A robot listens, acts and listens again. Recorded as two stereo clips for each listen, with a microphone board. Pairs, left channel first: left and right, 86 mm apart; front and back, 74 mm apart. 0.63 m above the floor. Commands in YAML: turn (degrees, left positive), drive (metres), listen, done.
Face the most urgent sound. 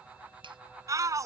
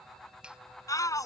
turn: -40
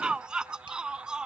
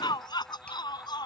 turn: -10
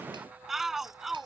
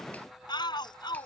done: "Found it: a shout, straight ahead."